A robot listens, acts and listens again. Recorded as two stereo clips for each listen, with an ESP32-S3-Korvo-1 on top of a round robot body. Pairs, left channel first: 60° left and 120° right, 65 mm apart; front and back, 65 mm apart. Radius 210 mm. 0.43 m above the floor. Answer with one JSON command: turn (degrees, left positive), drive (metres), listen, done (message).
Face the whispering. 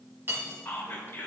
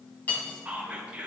{"turn": 110}
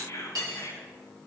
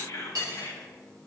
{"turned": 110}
{"turn": 25}
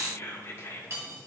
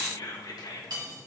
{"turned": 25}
{"turn": 10}
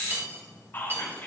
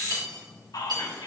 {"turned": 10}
{"done": "Facing the whispering, 2 to 4 m away."}